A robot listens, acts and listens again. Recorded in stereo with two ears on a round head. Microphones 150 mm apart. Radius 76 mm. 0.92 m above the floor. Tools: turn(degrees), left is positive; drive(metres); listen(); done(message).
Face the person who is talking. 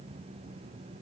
listen()
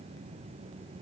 listen()
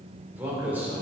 turn(degrees=-30)
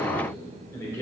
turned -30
turn(degrees=20)
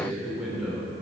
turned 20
done("Found it: a man speaking, straight ahead, 2 to 4 m away.")